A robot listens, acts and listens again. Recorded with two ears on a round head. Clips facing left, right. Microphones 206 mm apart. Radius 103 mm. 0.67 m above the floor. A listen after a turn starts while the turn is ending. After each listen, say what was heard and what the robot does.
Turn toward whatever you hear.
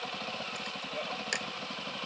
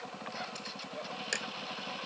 Turn 30° right.
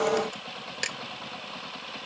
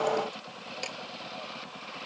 So it is at 25° left. Turn 25° left.
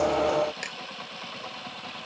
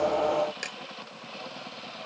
The camera shutter is now 15° right. Turn 15° right.
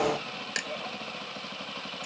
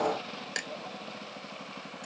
Facing the camera shutter.